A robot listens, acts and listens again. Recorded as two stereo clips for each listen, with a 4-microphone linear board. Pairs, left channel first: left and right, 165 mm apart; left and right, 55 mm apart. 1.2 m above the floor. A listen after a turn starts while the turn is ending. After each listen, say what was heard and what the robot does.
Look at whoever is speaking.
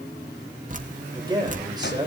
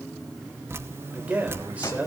The man speaking: about 25° right or 155° right. Turn 25° right.
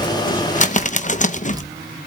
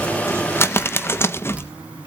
Keep listening.
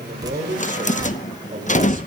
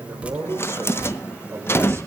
So it is at 130° right. Turn 130° right.
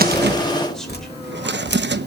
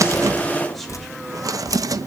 Keep listening.
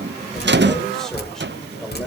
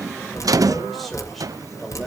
Keep listening.
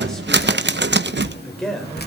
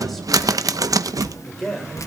Facing the man speaking, over 4 m away.